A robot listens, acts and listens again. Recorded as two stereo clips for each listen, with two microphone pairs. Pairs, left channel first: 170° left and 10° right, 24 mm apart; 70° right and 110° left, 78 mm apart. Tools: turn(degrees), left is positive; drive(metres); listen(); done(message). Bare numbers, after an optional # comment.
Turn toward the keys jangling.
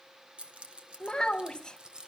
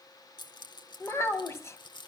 # The keys jangling: 65° right.
turn(-65)
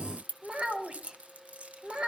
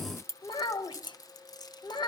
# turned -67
# The keys jangling is now 40° right.
turn(-40)
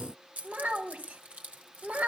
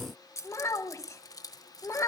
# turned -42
# The keys jangling is now 35° right.
turn(-35)
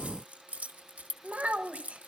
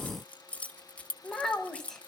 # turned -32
done("Facing the keys jangling, 1 to 2 m away.")